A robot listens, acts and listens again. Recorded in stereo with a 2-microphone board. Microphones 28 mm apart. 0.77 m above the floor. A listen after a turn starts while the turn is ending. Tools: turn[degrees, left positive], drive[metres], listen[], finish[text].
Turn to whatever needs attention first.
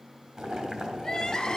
Thought: The crying: about 25° left or 155° left.
Action: turn[25]
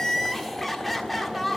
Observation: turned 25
Action: finish[Found it: crying, straight ahead.]